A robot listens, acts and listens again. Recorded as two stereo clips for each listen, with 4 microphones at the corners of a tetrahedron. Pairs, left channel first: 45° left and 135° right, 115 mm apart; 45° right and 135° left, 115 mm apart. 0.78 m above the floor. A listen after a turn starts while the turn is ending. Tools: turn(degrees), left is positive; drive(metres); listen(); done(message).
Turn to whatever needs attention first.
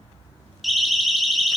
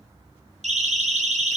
turn(degrees=135)
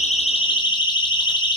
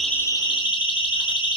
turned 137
done("Facing the siren.")